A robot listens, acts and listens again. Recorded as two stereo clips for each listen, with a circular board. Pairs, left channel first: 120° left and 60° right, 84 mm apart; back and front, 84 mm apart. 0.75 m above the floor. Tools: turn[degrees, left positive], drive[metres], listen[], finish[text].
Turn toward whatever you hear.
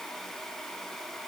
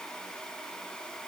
Action: listen[]
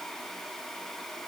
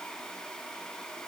Action: listen[]
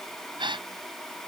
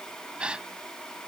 Thought: The gasp: 80° right.
Action: turn[-80]
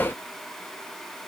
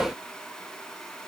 Action: finish[Facing where the gasp came from. I can't hear it now.]